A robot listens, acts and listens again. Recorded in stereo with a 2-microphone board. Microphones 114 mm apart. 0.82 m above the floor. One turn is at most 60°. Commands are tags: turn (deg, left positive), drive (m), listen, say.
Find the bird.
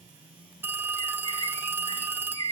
<turn deg="-60"/>
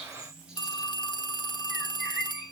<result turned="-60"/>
<say>Facing the bird.</say>